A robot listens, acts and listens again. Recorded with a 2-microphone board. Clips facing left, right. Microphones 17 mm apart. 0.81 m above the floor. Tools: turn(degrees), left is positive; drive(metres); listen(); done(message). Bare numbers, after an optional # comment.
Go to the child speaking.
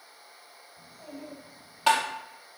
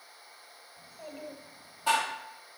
# The child speaking: about 65° right or 115° right.
turn(-65)
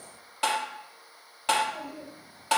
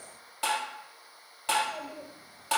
# So it is at 50° right.
turn(-50)
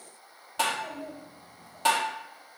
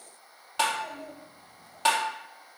# The child speaking is now 10° right.
turn(-10)
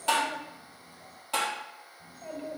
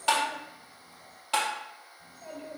drive(1.0)
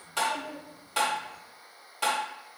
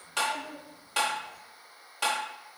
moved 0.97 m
drive(1.0)
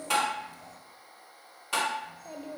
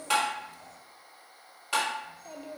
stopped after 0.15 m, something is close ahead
# The child speaking is now 10° right.
turn(-10)
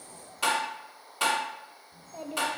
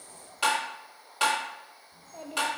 done("I am next to the child speaking.")